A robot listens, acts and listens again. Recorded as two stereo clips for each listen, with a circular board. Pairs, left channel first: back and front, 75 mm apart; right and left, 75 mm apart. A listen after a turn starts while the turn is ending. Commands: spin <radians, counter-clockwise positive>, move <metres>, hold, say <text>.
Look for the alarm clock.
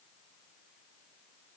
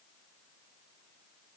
hold
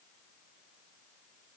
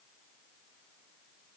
hold
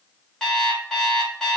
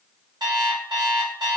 spin 1.75
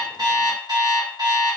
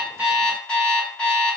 spin -0.26
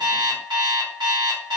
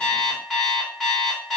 say Facing the alarm clock, under 1 m away.